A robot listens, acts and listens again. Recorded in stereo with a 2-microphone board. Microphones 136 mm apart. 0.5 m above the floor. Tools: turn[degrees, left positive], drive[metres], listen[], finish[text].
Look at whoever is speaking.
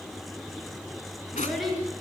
Action: turn[30]
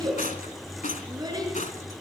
Thought: So it is at 30° right.
Action: turn[-30]
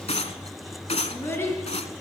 Thought: The child speaking is now 20° left.
Action: turn[20]
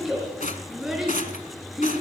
Action: finish[Facing the child speaking.]